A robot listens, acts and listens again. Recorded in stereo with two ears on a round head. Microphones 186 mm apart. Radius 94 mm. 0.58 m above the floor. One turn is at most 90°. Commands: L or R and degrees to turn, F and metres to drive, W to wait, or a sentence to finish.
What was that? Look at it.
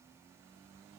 W
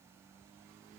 W
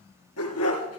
L90
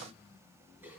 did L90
W
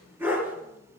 R10
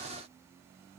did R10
W
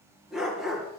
Found it: a dog barking, straight ahead.